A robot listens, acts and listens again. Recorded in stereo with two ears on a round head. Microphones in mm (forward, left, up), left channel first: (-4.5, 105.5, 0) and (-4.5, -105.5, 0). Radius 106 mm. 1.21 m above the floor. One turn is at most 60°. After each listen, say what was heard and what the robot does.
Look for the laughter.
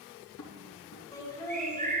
Turn 30° left.
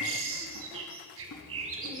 Keep listening.
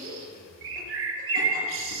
Keep listening.
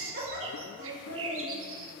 So it is at 50° right. Turn 50° right.
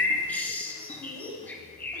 The laughter is now 15° left. Turn 15° left.
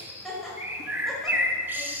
Facing the laughter.